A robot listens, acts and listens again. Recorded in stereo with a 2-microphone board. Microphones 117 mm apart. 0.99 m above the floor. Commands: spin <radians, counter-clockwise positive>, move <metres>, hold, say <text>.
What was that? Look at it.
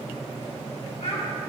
spin 1.13
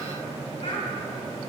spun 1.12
spin 1.05
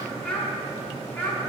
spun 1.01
spin 0.26
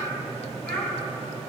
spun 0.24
spin 0.17
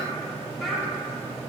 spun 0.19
say Facing the child speaking.